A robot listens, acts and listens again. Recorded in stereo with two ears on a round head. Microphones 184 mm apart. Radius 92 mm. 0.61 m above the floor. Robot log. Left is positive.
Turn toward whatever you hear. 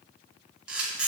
cmd yaw -30
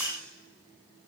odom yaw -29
cmd idle
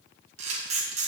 note: So it is at 145° right.
cmd yaw -145
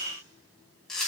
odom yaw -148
end: Facing the camera shutter.